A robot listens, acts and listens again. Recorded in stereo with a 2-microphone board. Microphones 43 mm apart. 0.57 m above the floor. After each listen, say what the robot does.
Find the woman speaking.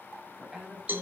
Turn 20° right.
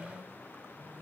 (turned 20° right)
Turn 40° right.
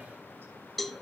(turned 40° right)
Keep listening.
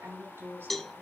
Turn 105° right.
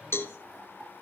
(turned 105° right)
Keep listening.
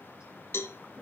Keep listening.
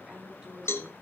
Turn 20° right.
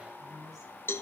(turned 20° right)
Found it: a woman speaking, straight ahead, over 4 m away.